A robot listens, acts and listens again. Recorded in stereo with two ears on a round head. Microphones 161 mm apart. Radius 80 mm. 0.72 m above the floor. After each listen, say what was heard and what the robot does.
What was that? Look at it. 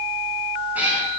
Turn 30° right.
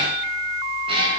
So it is at 150° right. Turn 150° right.
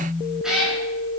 Found it: a cat meowing, straight ahead.